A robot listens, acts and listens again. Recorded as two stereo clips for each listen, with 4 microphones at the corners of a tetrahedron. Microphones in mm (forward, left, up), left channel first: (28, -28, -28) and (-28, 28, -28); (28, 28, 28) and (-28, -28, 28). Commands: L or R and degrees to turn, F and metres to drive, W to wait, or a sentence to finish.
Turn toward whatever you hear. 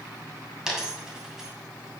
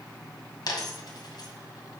L50
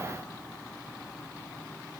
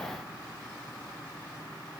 I heard a dropped coin from this way, but can't make it out now.